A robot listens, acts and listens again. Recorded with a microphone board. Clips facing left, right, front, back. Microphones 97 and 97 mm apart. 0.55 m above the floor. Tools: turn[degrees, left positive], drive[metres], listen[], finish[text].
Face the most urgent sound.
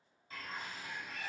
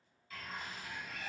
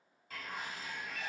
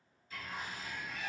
Action: listen[]
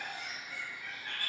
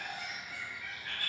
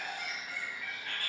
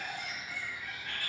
Action: listen[]
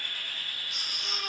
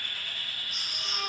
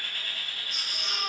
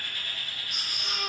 Thought: The baby crying: 105° left.
Action: turn[105]
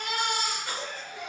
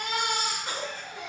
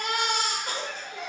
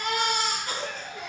Thought: The baby crying is now 20° right.
Action: turn[-20]
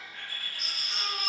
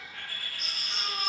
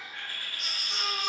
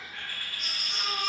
Action: finish[Found it: a baby crying, straight ahead.]